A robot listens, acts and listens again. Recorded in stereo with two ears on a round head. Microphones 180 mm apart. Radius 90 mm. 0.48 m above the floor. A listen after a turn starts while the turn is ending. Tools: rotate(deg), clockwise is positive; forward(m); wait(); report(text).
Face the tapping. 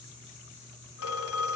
wait()
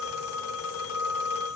wait()
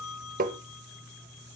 rotate(45)
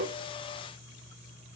wait()
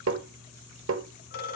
rotate(90)
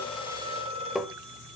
report("Facing the tapping, under 1 m away.")